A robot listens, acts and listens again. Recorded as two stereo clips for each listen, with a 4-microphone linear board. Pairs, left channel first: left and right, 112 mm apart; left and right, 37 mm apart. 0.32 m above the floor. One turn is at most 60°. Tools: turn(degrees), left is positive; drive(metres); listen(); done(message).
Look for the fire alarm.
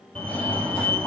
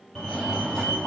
turn(degrees=30)
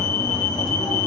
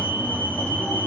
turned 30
turn(degrees=60)
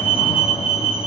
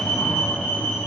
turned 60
turn(degrees=60)
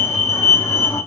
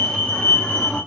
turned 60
turn(degrees=25)
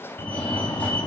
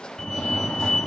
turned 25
turn(degrees=15)
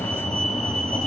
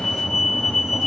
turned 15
done("Found it: a fire alarm, straight ahead, 2 to 4 m away.")